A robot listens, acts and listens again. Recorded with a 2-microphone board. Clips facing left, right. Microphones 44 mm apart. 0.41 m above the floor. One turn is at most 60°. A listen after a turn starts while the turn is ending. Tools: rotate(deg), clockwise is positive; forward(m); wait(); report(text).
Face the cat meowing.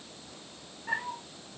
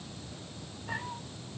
rotate(-60)
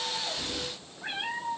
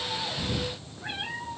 rotate(-20)
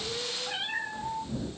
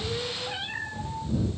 report("Found it: a cat meowing, straight ahead.")